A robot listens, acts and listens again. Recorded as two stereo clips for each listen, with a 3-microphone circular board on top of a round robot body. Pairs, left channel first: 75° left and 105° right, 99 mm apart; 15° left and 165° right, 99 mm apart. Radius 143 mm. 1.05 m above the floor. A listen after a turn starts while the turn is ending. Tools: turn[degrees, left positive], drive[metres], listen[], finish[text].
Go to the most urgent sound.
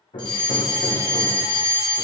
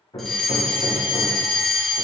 Thought: The fire alarm: 100° left.
Action: turn[100]
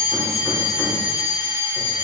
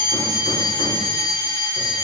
Thought: The fire alarm is now 25° left.
Action: turn[25]
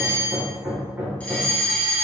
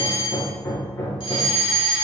Action: drive[1.0]
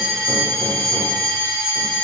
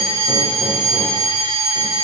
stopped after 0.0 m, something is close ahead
Action: finish[Blocked. The fire alarm is further on, straight ahead.]